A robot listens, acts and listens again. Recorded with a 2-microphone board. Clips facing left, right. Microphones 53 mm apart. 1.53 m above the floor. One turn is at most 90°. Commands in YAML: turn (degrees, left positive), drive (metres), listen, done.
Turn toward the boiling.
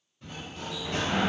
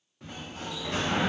listen: true
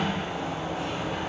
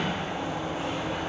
listen: true
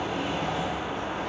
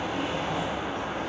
done: "I can't make out boiling, only a sliding door."